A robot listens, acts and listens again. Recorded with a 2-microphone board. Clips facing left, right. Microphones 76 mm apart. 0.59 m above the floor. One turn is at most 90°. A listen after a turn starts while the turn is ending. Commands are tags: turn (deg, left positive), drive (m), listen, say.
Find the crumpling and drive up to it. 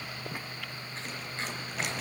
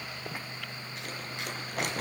<turn deg="-50"/>
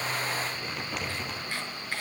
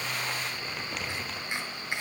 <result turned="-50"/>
<drive m="1.0"/>
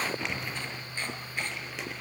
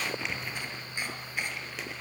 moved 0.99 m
<drive m="1.0"/>
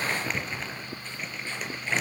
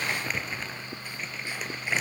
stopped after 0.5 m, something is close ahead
<say>Blocked. The crumpling is further on, straight ahead.</say>